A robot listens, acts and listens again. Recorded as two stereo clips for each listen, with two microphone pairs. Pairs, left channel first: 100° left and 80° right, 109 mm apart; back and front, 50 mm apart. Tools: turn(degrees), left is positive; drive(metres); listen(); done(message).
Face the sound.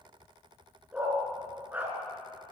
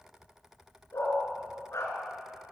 turn(degrees=-155)
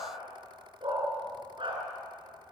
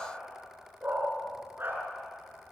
turn(degrees=-40)
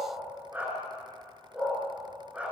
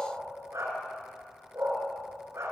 done("Facing the dog barking, over 4 m away.")